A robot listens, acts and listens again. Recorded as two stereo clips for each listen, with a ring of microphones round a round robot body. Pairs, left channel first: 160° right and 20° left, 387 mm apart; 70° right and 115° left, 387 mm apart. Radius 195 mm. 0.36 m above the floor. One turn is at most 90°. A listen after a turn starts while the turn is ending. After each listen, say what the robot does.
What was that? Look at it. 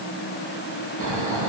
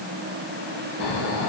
Turn 30° right.
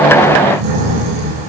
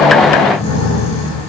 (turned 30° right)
Found it: snoring, straight ahead.